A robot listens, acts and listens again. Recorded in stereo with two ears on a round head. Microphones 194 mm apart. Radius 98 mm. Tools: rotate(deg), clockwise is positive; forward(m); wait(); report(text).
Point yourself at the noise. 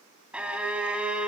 rotate(30)
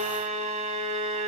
rotate(145)
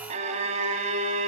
rotate(35)
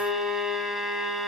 report("Found it: a violin, straight ahead.")